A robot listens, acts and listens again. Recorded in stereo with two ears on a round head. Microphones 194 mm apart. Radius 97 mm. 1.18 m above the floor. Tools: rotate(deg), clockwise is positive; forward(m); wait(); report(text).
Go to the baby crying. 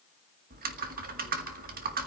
wait()
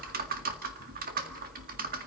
wait()
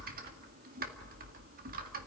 report("I can't make out a baby crying, only typing on a keyboard.")